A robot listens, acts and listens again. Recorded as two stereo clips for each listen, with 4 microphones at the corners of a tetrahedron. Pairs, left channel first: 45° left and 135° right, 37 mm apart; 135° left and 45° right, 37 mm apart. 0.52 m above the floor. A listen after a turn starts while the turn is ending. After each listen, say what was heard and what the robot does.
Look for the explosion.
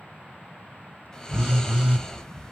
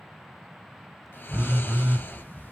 The explosion: 170° right. Turn 170° right.
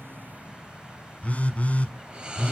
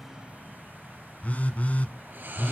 Facing where the explosion came from. I can't hear it now.